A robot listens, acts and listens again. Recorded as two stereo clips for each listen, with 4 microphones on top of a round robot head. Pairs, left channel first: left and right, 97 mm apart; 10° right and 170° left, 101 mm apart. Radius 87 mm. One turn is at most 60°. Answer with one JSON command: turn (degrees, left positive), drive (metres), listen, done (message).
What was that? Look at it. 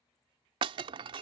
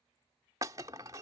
{"turn": -60}
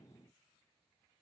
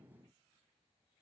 {"turn": -60}
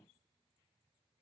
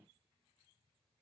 {"done": "I heard breaking glass from this way, but can't make it out now."}